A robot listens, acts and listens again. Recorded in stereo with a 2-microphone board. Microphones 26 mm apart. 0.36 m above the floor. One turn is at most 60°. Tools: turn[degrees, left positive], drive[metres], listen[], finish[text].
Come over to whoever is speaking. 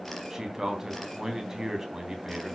Action: turn[-30]
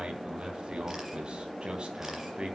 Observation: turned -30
Thought: So it is at 135° right.
Action: turn[-60]
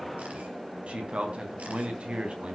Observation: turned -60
Thought: The man speaking is now 70° right.
Action: turn[-60]
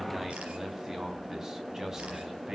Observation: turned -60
Thought: The man speaking is now 30° right.
Action: turn[-30]
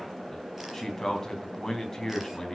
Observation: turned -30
Thought: The man speaking is now 20° left.
Action: turn[20]
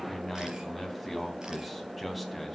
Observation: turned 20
Action: drive[1.0]
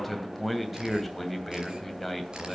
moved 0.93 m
Action: drive[1.0]
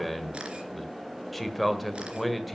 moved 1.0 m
Action: drive[1.0]
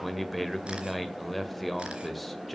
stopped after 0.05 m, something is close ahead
Action: finish[Arrived at the man speaking, straight ahead.]